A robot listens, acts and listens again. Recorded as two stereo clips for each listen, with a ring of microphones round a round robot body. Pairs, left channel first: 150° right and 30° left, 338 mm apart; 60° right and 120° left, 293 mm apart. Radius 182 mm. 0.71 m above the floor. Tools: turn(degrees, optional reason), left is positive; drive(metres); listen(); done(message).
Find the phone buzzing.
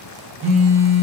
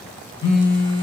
turn(degrees=-40, reason="The phone buzzing: 40° right.")
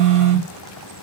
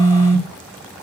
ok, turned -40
done("Facing the phone buzzing, 1 to 2 m away.")